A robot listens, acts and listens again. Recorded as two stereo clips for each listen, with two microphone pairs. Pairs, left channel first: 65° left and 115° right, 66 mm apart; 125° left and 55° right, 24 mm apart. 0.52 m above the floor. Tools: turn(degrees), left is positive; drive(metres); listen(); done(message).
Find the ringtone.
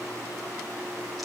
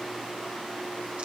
listen()
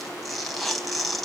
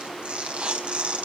listen()
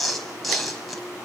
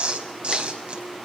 done("I can't make out a ringtone, only tearing paper.")